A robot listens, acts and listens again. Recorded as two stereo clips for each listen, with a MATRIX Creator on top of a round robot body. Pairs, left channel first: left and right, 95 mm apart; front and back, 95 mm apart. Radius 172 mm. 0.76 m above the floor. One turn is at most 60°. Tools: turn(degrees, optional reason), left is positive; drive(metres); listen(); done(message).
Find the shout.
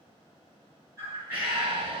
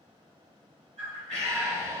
turn(degrees=-60, reason="The shout: 115° right.")
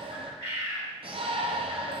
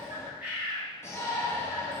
turn(degrees=-60, reason="The shout is now 60° right.")
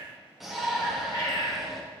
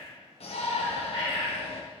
done("Found it: a shout, straight ahead, 1 to 2 m away.")